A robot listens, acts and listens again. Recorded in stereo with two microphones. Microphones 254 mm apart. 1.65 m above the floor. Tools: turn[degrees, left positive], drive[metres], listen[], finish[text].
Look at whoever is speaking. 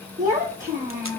Thought: The child speaking: about 35° right or 145° right.
Action: turn[-35]
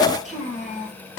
Action: finish[Found it: a child speaking, straight ahead, 2 to 4 m away.]